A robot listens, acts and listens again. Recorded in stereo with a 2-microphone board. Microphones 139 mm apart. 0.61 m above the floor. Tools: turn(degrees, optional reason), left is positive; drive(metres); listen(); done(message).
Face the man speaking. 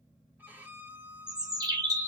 listen()
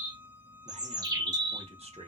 turn(degrees=-45, reason="The man speaking: about 45° right or 135° right.")
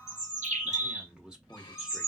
done("Found it: a man speaking, straight ahead.")